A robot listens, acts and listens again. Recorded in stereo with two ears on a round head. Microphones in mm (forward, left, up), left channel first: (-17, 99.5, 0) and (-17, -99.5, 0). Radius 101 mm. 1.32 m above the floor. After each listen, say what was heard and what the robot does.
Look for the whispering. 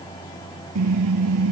Keep listening.
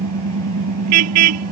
Keep listening.
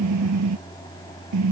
I can't make out whispering to turn to.